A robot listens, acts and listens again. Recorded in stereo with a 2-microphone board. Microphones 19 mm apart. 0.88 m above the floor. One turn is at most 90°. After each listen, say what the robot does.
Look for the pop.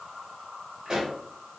Turn 35° right.
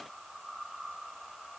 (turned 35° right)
Keep listening.
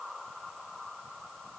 I heard a pop, but can't make it out now. It was about straight ahead or 110° right.